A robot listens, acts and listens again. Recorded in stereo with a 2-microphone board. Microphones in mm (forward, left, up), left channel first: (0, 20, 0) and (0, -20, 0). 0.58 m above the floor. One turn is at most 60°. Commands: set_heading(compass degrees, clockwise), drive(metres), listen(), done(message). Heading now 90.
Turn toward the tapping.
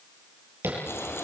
set_heading(150)
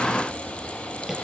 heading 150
listen()
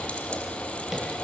listen()
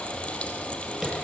set_heading(160)
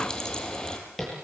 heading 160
done("Found it: tapping, straight ahead.")